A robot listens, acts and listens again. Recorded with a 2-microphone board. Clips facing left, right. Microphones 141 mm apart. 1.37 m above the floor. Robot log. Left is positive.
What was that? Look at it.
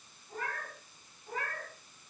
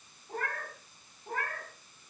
note: The cat meowing: about 55° right or 125° right.
cmd yaw -55
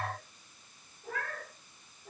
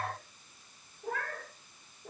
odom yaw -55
note: So it is at 60° right.
cmd yaw -60
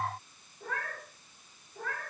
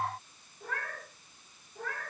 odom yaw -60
end: Found it: a cat meowing, straight ahead, over 4 m away.